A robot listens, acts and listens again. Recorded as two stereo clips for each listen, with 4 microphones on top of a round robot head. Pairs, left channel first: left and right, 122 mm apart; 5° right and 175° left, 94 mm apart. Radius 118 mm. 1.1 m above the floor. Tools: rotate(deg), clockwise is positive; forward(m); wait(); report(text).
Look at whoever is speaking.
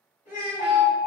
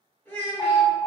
rotate(-60)
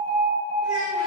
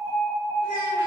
wait()
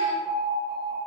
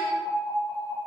wait()
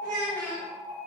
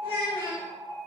rotate(-15)
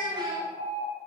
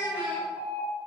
report("Found it: a child speaking, straight ahead, 2 to 4 m away.")